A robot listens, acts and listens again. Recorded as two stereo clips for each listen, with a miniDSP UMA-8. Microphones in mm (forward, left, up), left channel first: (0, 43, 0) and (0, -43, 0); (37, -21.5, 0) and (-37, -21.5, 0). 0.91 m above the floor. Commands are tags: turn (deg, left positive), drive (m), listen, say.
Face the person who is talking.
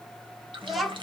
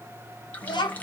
<say>Facing the child speaking, 1 to 2 m away.</say>